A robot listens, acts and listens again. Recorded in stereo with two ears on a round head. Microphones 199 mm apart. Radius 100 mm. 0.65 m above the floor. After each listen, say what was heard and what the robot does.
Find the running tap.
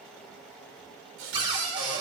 The running tap: about 60° right or 120° right. Turn 60° right.
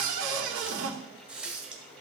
Facing the running tap.